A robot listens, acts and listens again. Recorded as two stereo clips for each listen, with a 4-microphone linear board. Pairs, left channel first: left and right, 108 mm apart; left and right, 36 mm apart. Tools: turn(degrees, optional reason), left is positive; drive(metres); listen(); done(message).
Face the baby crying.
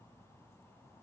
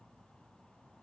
listen()
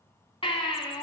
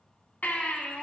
turn(degrees=55, reason="The baby crying: about 55° left or 125° left.")
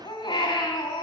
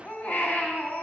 turn(degrees=60, reason="So it is at 60° left.")
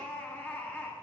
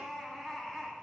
turn(degrees=15, reason="The baby crying is now 15° left.")
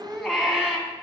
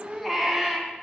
done("Found it: a baby crying, straight ahead, 2 to 4 m away.")